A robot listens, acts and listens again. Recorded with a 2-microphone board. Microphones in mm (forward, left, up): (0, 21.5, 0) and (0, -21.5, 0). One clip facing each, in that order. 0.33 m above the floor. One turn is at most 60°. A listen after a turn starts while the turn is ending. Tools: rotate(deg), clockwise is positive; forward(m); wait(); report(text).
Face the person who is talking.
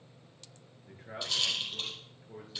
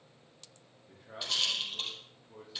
rotate(-60)
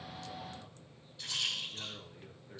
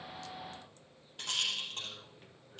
rotate(-50)
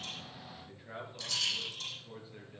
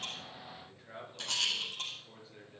rotate(-10)
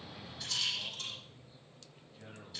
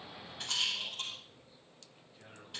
report("Found it: a man speaking, straight ahead.")